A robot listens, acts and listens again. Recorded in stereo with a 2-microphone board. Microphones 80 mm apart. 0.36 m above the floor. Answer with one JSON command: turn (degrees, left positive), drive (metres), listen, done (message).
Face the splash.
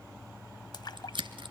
{"turn": 65}
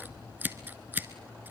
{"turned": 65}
{"listen": true}
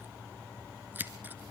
{"done": "I heard a splash, but can't make it out now. It was about straight ahead or 50° left."}